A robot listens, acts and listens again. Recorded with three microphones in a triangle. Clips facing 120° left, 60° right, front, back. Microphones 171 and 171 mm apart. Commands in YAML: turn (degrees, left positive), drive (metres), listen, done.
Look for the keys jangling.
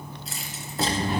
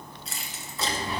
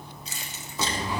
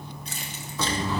turn: -150
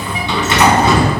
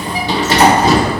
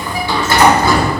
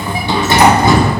listen: true
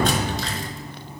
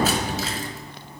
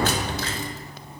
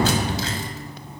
listen: true
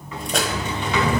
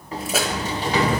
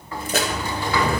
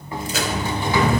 turn: 25
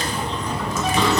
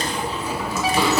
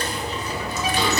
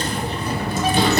listen: true
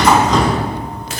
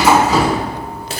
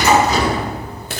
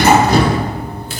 listen: true
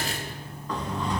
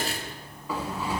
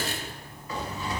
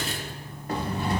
done: "Facing where the keys jangling came from. I can't hear it now."